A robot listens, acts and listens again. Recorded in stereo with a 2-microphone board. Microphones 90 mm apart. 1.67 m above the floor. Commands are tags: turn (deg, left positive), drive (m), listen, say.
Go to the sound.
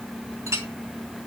<turn deg="-35"/>
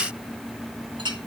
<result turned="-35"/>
<turn deg="-105"/>
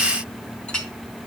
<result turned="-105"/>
<turn deg="10"/>
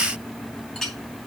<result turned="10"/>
<drive m="1.0"/>
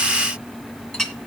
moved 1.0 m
<drive m="1.0"/>
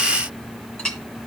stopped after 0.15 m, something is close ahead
<turn deg="10"/>
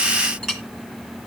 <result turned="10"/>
<say>I am next to the clink.</say>